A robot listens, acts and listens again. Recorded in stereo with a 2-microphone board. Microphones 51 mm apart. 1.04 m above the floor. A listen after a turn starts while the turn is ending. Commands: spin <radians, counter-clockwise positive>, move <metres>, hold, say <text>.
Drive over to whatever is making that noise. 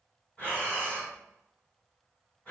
spin 0.44
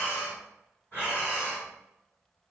spin 2.27
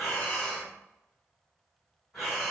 move 1.0
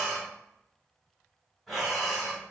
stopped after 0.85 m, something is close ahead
say I am next to the breathing.